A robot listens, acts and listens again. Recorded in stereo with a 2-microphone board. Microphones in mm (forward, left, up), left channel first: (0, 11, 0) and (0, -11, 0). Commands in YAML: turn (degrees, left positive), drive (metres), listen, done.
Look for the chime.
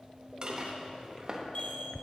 turn: 60
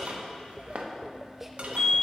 turn: 60
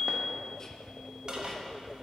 turn: 20
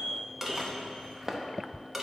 listen: true
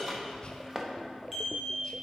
done: "Found it: a chime, straight ahead."